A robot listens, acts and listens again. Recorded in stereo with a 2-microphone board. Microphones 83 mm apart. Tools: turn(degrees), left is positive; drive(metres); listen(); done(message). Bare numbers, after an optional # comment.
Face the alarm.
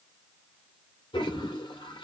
listen()
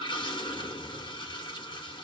listen()
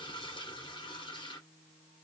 done("I can't make out an alarm to turn to.")